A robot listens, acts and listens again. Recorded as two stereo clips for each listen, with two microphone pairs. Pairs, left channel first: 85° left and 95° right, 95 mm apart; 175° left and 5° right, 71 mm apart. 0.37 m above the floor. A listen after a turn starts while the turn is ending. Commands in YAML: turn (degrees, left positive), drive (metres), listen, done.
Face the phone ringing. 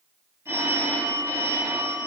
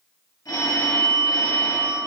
turn: -155
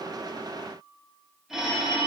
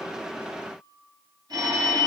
done: "Facing the phone ringing, 1 to 2 m away."